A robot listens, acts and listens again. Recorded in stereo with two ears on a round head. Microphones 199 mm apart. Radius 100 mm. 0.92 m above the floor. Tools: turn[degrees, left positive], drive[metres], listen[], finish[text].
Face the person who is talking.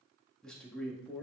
Action: turn[30]
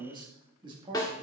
Thought: So it is at 20° right.
Action: turn[-20]
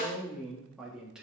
Action: finish[Facing the man speaking, 1 to 2 m away.]